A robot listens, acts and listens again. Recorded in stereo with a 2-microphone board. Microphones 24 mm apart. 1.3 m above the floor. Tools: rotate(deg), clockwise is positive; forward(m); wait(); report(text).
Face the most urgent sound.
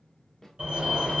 rotate(60)
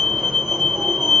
rotate(40)
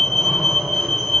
rotate(10)
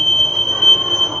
report("Facing the fire alarm.")